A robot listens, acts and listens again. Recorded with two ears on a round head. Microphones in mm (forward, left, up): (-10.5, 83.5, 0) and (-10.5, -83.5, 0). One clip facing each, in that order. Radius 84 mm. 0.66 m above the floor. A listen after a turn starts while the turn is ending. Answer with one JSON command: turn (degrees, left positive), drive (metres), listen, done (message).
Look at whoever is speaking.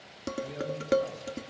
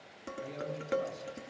{"turn": -55}
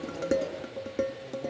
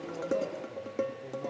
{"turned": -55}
{"listen": true}
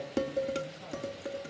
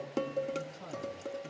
{"turn": -75}
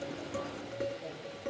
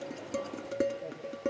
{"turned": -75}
{"listen": true}
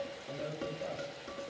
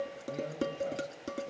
{"done": "Facing the man speaking, over 4 m away."}